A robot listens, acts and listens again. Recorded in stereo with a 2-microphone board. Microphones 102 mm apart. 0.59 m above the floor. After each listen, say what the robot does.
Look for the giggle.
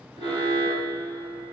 Keep listening.
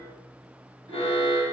Keep listening.
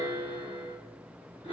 I can't make out a giggle to turn to.